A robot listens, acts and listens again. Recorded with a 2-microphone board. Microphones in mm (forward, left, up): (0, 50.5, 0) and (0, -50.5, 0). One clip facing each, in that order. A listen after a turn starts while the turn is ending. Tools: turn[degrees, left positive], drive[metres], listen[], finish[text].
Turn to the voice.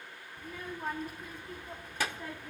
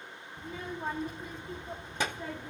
Thought: The child speaking: about 20° right or 160° right.
Action: turn[-20]
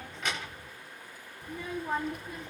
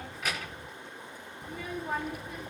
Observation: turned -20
Action: finish[Found it: a child speaking, straight ahead, under 1 m away.]